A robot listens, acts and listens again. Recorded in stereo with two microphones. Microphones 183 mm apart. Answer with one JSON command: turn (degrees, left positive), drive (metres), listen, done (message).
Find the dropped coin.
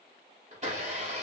{"listen": true}
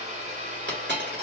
{"turn": -90}
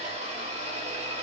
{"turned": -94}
{"done": "I heard a dropped coin from this way, but can't make it out now."}